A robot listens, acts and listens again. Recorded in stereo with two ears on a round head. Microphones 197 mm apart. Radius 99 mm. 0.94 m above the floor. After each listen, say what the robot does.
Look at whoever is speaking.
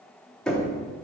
Keep listening.
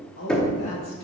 Turn 60° left.
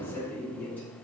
Turn 10° left.
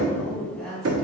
Facing the woman speaking.